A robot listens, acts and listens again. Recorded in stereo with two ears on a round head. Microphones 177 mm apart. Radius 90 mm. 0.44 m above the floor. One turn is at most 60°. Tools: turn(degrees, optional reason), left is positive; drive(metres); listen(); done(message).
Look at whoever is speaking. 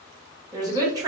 turn(degrees=-20, reason="The woman speaking: about 20° right or 160° right.")
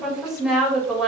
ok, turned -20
done("Found it: a woman speaking, straight ahead, 1 to 2 m away.")